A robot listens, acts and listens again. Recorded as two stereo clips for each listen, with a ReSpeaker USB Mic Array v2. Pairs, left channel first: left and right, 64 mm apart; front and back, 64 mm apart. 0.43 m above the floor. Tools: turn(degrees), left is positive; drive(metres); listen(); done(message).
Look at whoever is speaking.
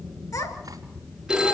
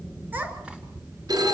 turn(degrees=115)
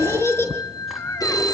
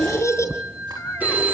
turn(degrees=45)
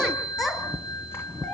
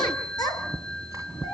done("Facing the child speaking.")